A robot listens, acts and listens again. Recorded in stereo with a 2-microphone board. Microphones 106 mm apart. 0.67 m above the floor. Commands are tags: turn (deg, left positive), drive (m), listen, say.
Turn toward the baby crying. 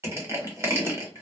<listen/>
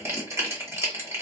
<listen/>
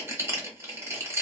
<say>I can't make out a baby crying, only crushing.</say>